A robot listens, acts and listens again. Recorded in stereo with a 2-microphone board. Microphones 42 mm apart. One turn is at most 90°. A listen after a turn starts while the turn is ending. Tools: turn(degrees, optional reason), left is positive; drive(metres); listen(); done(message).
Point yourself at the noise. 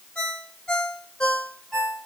turn(degrees=15, reason="The ringtone: about 15° left or 165° left.")
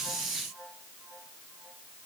listen()
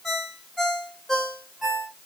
done("Found it: a ringtone, straight ahead, 1 to 2 m away.")